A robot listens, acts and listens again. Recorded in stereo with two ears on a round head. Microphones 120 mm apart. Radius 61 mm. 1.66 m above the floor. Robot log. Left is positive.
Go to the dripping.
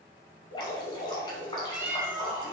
note: The dripping: about 35° left or 145° left.
cmd yaw +35
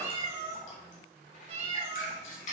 note: So it is at 105° left.
cmd yaw +105
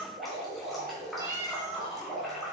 cmd fwd 1.0
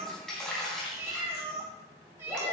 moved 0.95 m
cmd fwd 1.0
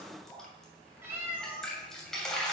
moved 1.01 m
cmd fwd 1.0
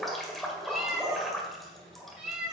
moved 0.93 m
cmd fwd 1.0
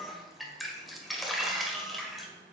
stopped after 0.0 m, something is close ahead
end: Arrived at the dripping, straight ahead.